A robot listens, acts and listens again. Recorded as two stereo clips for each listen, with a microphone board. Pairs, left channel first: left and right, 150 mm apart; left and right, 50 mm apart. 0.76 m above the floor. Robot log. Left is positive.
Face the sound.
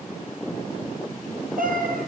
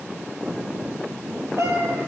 note: The cat meowing: about 70° right or 110° right.
cmd yaw -70
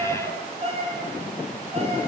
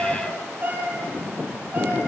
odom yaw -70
note: So it is at 40° right.
cmd yaw -40
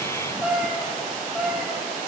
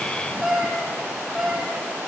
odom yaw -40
end: Found it: a cat meowing, straight ahead.